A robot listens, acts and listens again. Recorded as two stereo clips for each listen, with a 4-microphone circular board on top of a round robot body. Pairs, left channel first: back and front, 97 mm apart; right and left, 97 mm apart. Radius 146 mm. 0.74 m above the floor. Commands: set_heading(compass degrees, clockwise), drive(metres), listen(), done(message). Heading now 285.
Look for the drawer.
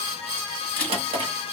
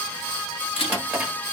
set_heading(275)
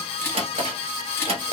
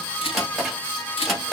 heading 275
done("Facing the drawer.")